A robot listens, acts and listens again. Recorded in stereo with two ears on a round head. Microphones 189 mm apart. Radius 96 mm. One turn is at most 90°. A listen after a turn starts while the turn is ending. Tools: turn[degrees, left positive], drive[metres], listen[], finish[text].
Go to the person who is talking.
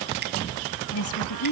Thought: The woman speaking: about 70° left or 110° left.
Action: turn[70]
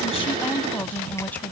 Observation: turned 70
Thought: So it is at 10° left.
Action: turn[10]
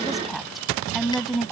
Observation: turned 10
Action: drive[1.0]
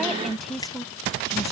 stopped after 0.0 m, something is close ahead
Action: finish[Something is in my way. I am facing the woman speaking but have not reached it.]